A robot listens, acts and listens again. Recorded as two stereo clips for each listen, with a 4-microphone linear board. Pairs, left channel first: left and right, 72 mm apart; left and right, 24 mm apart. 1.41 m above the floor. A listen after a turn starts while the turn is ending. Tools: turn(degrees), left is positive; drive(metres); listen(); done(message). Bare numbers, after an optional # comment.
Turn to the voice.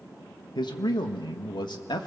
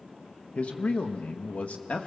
turn(90)
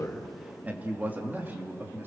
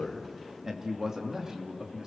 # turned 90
# So it is at 30° right.
turn(-30)
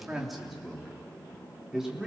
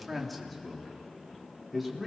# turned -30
done("Facing the man speaking.")